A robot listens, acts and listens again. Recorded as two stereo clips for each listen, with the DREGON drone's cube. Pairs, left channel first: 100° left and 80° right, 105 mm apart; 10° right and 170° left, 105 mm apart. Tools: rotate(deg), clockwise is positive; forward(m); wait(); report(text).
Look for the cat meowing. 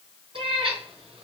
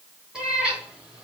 rotate(110)
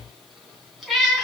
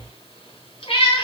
rotate(-10)
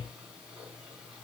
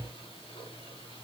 wait()
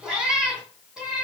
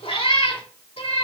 report("Found it: a cat meowing, straight ahead.")